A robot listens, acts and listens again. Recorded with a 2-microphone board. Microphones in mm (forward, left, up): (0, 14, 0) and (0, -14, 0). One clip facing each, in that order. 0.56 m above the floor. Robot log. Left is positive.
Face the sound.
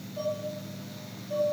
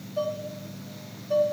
note: The dishes clattering: about 60° right or 120° right.
cmd yaw -60
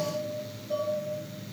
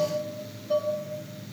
note: So it is at 50° right.
cmd yaw -50
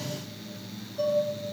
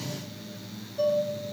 note: The dishes clattering is now 15° right.
cmd yaw -15
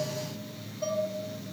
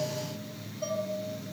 end: Found it: dishes clattering, straight ahead.